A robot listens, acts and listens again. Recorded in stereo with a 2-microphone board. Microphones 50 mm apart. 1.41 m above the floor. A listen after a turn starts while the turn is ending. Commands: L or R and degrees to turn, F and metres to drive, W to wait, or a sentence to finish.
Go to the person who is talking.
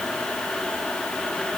W
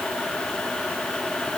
W
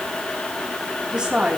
R30
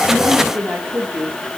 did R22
R145
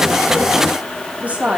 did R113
R30
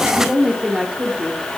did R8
R20
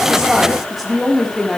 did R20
F1.0
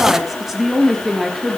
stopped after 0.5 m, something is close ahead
Something is in my way. I am facing the woman speaking but have not reached it.